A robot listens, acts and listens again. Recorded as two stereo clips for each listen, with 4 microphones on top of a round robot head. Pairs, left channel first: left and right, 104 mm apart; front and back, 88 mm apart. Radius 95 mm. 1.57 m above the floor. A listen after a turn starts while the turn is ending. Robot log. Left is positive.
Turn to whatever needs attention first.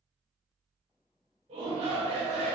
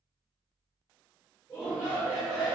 note: The shout: 75° right.
cmd yaw -75
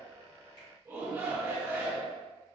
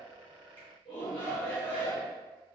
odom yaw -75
note: The shout is now 25° right.
cmd yaw -25
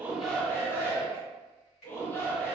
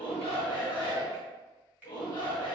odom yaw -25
note: The shout is now 25° left.
cmd yaw +25
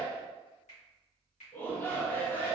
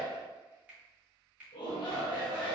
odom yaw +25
note: The shout is now 20° left.
cmd yaw +20
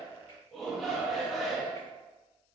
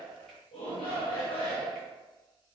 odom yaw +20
end: Facing the shout.